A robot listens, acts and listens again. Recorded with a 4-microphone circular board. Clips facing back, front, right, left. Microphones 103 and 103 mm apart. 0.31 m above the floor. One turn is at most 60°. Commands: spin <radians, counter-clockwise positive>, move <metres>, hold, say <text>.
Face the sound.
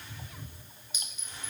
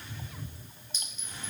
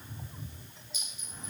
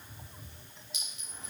spin 1.05
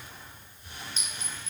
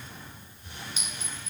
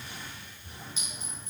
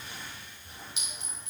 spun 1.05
spin 1.05
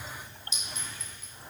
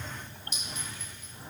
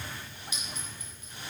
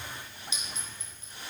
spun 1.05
spin 0.52
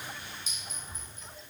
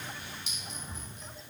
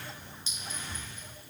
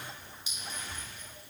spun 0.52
spin 0.26
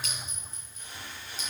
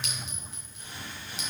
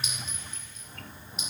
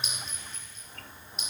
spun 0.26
say Facing the clink, 2 to 4 m away.